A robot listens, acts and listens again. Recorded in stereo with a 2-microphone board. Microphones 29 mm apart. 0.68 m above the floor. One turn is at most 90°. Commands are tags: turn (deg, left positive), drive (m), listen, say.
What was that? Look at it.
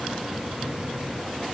<listen/>
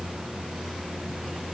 <listen/>
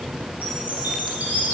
<turn deg="-75"/>
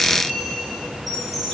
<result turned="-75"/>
<say>Facing the chime, 2 to 4 m away.</say>